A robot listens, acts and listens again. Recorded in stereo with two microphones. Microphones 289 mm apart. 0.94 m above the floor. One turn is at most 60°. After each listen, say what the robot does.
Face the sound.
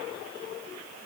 Keep listening.
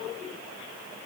Keep listening.
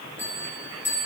Turn 30° right.
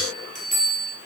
Turn 25° left.
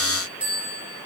Found it: a bell, straight ahead.